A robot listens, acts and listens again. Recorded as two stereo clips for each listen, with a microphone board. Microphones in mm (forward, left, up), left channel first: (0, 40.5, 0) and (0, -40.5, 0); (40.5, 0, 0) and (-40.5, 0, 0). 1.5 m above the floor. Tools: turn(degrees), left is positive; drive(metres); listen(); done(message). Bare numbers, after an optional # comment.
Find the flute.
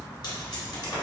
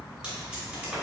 listen()
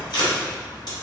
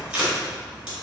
listen()
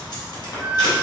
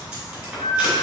# The flute: 15° right.
turn(-15)
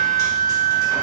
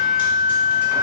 done("Facing the flute, 1 to 2 m away.")